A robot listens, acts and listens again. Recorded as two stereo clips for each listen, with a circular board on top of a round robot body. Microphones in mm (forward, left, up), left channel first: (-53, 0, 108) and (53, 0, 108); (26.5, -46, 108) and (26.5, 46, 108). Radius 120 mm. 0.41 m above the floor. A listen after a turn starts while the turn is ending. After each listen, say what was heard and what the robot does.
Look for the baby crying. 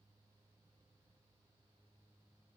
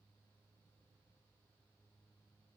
Keep listening.
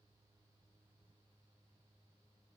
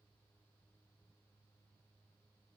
Keep listening.
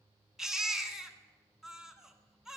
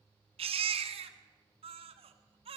The baby crying: 85° left. Turn 85° left.
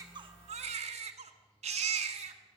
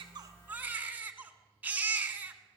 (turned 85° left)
The baby crying is now 15° left. Turn 15° left.
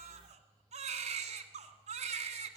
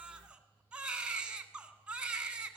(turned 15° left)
The baby crying is now 10° left. Turn 10° left.
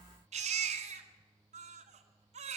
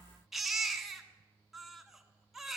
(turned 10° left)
Facing the baby crying.